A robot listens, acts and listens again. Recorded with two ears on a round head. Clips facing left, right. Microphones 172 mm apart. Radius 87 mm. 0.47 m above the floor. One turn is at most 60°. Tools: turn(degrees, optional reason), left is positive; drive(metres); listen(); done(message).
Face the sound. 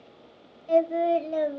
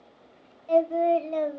turn(degrees=30)
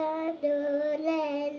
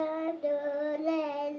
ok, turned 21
turn(degrees=60, reason="So it is at 145° left.")
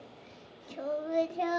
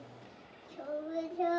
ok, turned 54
turn(degrees=60, reason="The singing is now 95° left.")
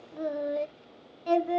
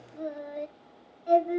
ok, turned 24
turn(degrees=60, reason="The singing is now 70° left.")
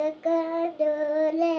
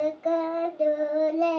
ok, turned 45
turn(degrees=25, reason="The singing is now 25° left.")
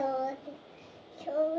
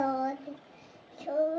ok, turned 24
done("Facing the singing.")